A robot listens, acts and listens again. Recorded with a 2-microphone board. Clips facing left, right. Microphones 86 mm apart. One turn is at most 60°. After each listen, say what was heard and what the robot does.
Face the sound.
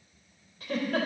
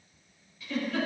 The giggle: about 50° left or 130° left. Turn 50° left.
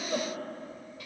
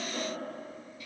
So it is at 80° left. Turn 60° left.
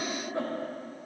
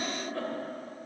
The giggle is now 20° left. Turn 20° left.
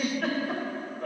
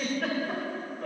Found it: a giggle, straight ahead, 2 to 4 m away.